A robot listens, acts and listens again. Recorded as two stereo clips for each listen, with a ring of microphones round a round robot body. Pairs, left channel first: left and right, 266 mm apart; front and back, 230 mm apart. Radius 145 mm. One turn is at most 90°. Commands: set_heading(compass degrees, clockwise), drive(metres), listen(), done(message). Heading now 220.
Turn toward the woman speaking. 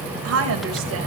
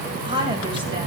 set_heading(310)
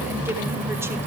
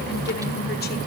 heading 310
set_heading(330)
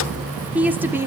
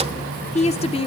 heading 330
set_heading(350)
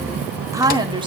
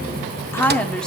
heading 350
set_heading(65)
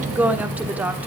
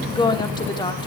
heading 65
set_heading(85)
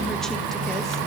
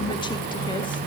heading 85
listen()
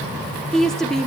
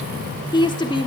done("Found it: a woman speaking, straight ahead.")